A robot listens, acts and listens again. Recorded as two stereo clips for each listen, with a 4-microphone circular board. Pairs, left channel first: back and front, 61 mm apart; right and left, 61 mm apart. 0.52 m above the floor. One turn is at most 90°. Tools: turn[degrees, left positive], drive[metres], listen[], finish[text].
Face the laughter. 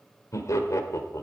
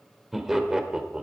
Thought: The laughter: 160° left.
Action: turn[90]
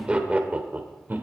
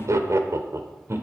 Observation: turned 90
Thought: The laughter is now 55° left.
Action: turn[55]
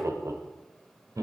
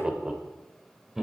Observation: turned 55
Action: finish[Found it: laughter, straight ahead, 1 to 2 m away.]